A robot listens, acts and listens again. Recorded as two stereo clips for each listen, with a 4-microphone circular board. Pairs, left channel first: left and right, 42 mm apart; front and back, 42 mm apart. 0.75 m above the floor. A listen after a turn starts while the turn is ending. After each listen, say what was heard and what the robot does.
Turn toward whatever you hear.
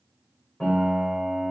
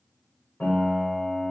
The piano: 35° left. Turn 35° left.
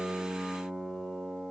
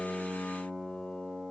The piano is now 10° left. Turn 10° left.
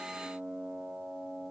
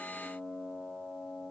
Facing the piano.